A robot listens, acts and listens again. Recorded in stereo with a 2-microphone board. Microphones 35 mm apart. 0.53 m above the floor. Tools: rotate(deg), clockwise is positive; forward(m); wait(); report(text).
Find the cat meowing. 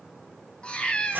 rotate(-25)
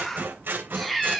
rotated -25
report("Found it: a cat meowing, straight ahead, 2 to 4 m away.")